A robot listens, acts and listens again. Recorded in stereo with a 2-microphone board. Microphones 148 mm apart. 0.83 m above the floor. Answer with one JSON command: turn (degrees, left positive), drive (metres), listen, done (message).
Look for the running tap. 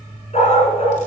{"listen": true}
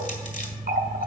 {"turn": -70}
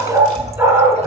{"listen": true}
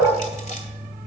{"listen": true}
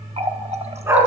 {"turn": -45}
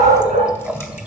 {"done": "Facing the running tap, under 1 m away."}